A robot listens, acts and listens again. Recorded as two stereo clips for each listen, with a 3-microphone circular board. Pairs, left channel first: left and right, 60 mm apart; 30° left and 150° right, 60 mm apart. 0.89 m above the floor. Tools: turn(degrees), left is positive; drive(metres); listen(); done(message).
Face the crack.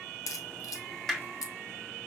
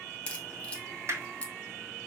turn(degrees=100)
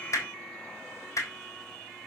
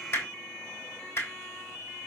done("Facing where the crack came from. I can't hear it now.")